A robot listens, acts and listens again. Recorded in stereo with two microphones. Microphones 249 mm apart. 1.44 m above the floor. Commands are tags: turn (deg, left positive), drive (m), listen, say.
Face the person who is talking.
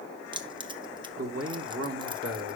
<turn deg="-65"/>
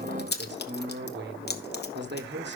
<turn deg="-45"/>
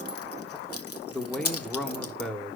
<say>Facing the man speaking, 1 to 2 m away.</say>